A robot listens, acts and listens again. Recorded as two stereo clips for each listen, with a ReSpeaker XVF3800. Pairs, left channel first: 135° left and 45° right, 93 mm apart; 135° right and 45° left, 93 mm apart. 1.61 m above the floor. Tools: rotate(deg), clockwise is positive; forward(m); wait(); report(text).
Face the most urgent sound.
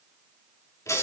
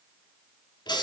wait()
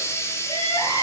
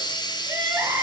rotate(-115)
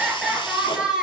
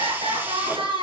rotate(-35)
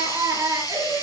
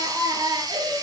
rotate(-10)
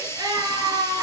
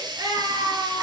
report("Found it: crying, straight ahead.")